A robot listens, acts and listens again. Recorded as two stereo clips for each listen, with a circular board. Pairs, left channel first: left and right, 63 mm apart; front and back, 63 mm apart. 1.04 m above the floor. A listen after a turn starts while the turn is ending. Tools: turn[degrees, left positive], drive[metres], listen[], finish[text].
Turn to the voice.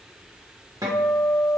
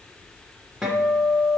Action: listen[]
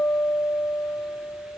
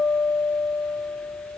Action: listen[]
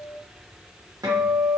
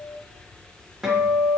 Action: finish[I can't make out anyone speaking to turn to.]